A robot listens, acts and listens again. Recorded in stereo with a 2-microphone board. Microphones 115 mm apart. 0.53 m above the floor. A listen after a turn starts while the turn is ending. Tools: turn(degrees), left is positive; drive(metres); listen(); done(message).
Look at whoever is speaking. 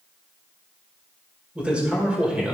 turn(degrees=-30)
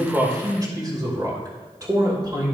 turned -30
turn(degrees=-140)
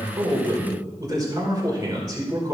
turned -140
turn(degrees=-40)
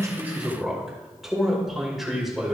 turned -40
done("Facing the man speaking, 2 to 4 m away.")